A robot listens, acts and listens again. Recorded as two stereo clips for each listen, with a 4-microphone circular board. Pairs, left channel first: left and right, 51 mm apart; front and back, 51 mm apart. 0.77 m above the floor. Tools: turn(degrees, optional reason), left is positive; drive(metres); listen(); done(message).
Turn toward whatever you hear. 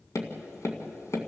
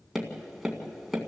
turn(degrees=95, reason="The tapping: 95° left.")
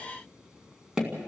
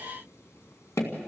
turn(degrees=-15, reason="The tapping is now 15° right.")
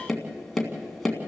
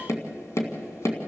done("Found it: tapping, straight ahead, 2 to 4 m away.")